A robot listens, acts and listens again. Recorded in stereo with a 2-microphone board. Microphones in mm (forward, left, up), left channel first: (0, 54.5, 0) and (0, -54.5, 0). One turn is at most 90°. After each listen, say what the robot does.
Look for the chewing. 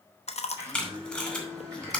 Turn 75° left.
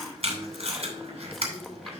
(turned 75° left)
Keep listening.
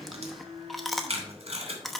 Found it: chewing, straight ahead.